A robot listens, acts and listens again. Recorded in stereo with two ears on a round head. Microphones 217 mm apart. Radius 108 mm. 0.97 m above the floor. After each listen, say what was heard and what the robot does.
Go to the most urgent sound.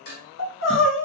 The crying: about 55° left or 125° left. Turn 55° left.
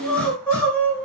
Drive 1.0 m forward.
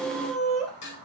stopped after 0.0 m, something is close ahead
Something is in my way. I am facing the crying but have not reached it.